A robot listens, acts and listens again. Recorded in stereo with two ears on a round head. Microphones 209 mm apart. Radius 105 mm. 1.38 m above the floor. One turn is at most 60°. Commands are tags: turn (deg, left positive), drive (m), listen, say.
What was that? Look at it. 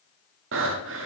<turn deg="-60"/>
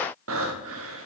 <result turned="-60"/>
<turn deg="-60"/>
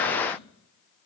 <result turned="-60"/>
<listen/>
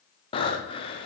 <turn deg="25"/>
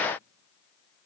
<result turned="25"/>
<listen/>
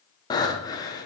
<turn deg="15"/>
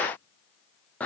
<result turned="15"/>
<say>Found it: breathing, straight ahead, under 1 m away.</say>